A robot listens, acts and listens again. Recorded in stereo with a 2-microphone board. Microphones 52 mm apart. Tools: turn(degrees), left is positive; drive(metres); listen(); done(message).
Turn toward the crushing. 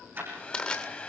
turn(degrees=20)
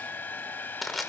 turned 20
done("Found it: crushing, straight ahead.")